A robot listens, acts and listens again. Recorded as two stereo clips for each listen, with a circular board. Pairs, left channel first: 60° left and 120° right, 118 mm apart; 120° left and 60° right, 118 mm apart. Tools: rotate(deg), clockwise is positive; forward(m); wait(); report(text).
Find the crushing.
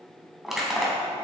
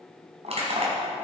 rotate(30)
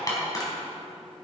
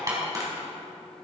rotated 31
report("Found it: crushing, straight ahead.")